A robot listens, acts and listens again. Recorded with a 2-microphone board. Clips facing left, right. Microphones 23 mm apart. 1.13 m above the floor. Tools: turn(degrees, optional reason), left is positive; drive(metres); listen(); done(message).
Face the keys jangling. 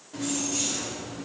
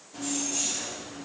turn(degrees=70, reason="The keys jangling: about 70° left or 110° left.")
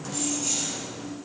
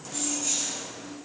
turn(degrees=30, reason="So it is at 30° left.")
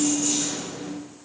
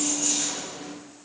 done("Found it: keys jangling, straight ahead, 2 to 4 m away.")